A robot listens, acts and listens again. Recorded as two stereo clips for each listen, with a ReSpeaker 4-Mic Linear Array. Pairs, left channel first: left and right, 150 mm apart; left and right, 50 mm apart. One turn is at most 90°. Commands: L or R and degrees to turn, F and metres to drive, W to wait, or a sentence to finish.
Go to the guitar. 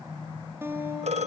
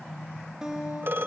R15
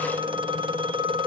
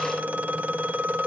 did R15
W
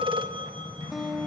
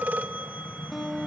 F1.0
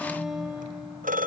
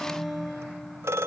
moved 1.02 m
F1.0
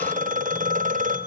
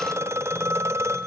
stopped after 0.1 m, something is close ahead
W
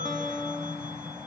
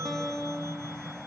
Arrived at the guitar, straight ahead.